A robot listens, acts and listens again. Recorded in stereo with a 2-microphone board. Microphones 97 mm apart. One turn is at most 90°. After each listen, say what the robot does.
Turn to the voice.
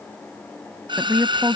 Turn 20° right.
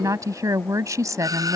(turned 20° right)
Turn 90° right.
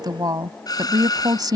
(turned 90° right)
Turn 50° right.
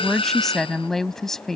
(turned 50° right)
Found it: a woman speaking, straight ahead.